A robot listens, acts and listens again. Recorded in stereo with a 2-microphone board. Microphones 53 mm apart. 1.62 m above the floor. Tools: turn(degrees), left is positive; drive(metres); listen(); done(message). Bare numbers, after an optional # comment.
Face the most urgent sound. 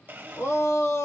# The shout: about 65° left or 115° left.
turn(65)
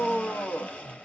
# So it is at 50° left.
turn(50)
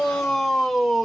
done("Found it: a shout, straight ahead, 1 to 2 m away.")